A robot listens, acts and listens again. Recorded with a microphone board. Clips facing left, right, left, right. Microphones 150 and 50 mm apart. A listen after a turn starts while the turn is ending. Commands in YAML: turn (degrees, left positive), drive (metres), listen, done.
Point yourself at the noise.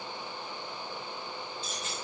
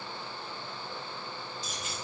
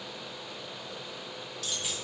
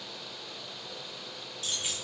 turn: -30
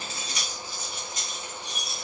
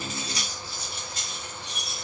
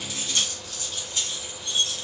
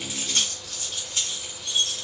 turn: -150
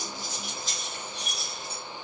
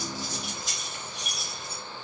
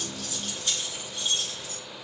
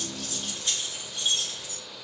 turn: -20
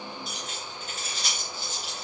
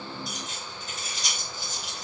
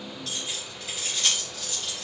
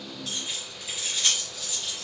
done: "Found it: keys jangling, straight ahead."